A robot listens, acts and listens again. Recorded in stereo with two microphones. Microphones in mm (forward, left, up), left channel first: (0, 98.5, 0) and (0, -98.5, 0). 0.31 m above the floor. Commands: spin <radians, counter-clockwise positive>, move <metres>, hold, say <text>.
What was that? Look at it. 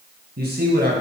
spin -0.96
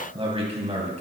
spin -0.61
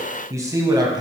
spin -0.35
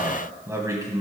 spin -0.35
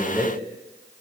spin -0.17
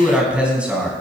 say Facing the man speaking, 2 to 4 m away.